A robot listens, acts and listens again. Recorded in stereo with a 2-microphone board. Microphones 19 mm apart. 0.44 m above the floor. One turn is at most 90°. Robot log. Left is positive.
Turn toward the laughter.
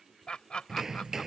note: The laughter: about 55° left or 125° left.
cmd yaw +55
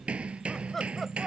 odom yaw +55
end: Facing the laughter.